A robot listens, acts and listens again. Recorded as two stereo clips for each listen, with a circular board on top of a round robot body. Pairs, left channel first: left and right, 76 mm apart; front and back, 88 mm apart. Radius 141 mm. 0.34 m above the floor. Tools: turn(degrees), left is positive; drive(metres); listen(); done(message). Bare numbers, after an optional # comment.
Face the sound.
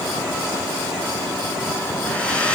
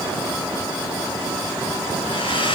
# The hair dryer: 15° left.
turn(15)
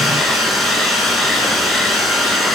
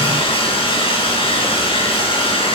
done("Found it: a hair dryer, straight ahead.")